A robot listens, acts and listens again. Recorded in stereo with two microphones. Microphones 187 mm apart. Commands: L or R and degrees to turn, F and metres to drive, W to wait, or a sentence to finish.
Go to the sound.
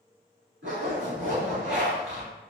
R90
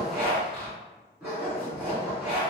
F1.0
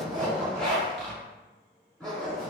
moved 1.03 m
F1.0
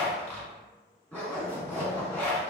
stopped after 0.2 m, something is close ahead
L10
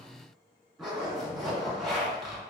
Arrived at the zipper, straight ahead.